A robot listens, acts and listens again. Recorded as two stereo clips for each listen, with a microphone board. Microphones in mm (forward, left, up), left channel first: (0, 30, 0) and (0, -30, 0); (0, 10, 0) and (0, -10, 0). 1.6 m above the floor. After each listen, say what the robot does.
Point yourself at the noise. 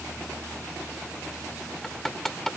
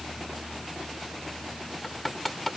Turn 30° left.
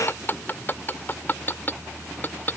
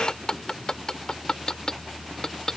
Turn 145° left.
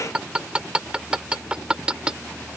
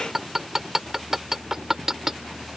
Turn 15° right.
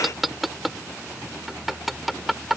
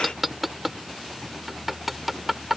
Found it: hammering, straight ahead.